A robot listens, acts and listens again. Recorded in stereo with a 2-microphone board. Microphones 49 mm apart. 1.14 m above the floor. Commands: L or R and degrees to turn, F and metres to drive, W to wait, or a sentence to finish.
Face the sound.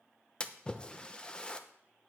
L20
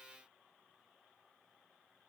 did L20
W
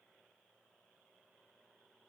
I heard a splash, but can't make it out now. It was about straight ahead or 140° left.